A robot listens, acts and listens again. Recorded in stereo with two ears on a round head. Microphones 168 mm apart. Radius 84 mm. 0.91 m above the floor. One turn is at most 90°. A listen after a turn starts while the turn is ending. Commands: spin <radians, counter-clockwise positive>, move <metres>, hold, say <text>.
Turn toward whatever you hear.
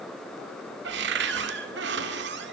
spin -1.05
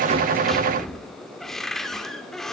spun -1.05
say Found it: a cupboard door, straight ahead.